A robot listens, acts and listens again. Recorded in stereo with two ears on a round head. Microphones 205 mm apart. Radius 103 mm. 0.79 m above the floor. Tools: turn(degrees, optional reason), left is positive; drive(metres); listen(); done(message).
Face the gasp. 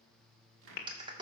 turn(degrees=45, reason="The gasp: about 45° left or 135° left.")
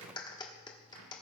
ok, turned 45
listen()
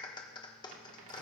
done("I heard a gasp, but can't make it out now. It was about straight ahead or 90° left.")